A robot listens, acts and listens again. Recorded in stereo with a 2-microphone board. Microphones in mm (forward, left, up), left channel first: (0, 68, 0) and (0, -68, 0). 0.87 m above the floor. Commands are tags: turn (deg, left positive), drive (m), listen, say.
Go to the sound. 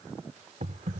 <turn deg="-65"/>
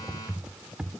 <drive m="1.0"/>
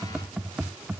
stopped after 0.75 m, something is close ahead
<say>Blocked. The typing on a keyboard is further on, straight ahead.</say>